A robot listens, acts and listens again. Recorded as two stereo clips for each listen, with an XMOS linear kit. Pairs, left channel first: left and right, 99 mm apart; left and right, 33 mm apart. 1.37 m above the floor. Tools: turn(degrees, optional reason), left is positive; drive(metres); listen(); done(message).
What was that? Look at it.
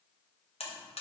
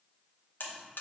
turn(degrees=90)
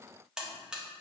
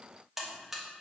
done("Found it: a buzzer, straight ahead.")